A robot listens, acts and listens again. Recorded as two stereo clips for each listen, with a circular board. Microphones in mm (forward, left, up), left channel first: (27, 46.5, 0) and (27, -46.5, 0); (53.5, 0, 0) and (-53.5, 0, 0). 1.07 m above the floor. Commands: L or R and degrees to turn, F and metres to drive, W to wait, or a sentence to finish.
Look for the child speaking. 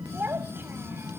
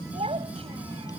R160
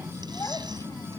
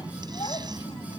W
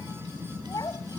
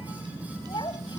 L45
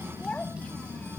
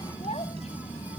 W
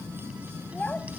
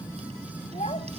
L15
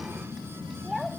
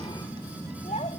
Facing the child speaking.